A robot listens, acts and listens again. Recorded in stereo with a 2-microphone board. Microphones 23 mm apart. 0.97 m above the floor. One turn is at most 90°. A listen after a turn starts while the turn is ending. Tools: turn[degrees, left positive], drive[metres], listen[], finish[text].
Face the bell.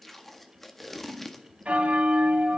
Thought: The bell: about 65° right or 115° right.
Action: turn[-65]
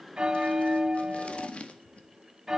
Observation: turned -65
Thought: So it is at 25° right.
Action: turn[-25]
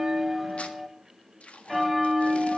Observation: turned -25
Action: finish[Found it: a bell, straight ahead, 1 to 2 m away.]